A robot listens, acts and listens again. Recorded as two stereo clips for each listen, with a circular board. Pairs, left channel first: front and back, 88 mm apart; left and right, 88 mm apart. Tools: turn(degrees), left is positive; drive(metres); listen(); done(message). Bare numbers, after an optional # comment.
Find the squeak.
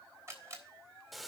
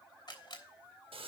listen()
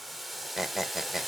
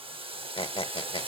# The squeak: 95° left.
turn(95)
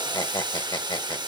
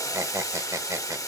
# The squeak is now 35° right.
turn(-35)
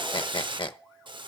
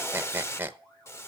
# The squeak is now 25° right.
turn(-25)
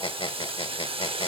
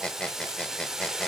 # The squeak is now 10° left.
turn(10)
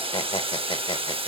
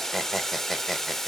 done("Found it: a squeak, straight ahead, under 1 m away.")